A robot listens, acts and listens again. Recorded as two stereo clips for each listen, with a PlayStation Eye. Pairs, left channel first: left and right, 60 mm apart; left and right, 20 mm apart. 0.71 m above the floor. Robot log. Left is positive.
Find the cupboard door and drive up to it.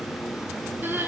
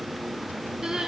cmd idle
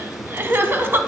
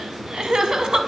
cmd idle
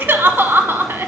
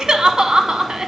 end: I can't make out a cupboard door to turn to.